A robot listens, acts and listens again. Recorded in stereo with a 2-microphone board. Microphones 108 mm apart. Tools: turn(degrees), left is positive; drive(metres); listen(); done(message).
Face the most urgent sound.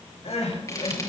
turn(degrees=90)
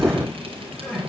turn(degrees=10)
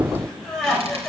done("Found it: crying, straight ahead.")